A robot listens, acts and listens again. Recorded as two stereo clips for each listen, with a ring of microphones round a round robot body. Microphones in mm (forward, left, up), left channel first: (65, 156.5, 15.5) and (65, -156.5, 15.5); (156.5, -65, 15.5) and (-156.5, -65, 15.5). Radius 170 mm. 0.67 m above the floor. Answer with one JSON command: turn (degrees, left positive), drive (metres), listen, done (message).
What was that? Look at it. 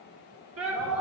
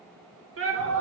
{"turn": -135}
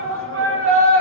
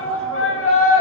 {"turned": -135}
{"turn": -45}
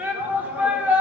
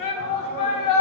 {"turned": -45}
{"done": "Facing the shout."}